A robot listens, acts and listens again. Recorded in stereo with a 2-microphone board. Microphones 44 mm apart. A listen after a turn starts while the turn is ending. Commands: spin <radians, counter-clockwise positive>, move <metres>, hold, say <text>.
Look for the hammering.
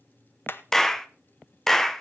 spin 0.87
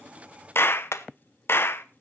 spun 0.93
spin 1.31
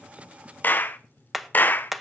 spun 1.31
say Found it: hammering, straight ahead.